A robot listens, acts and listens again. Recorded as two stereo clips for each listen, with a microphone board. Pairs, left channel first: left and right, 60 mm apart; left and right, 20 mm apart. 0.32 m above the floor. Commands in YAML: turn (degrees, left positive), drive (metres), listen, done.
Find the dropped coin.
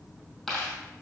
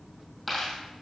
turn: 30
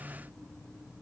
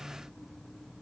listen: true
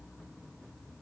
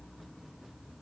done: "I heard a dropped coin, but can't make it out now. It was about 25° right or 145° left."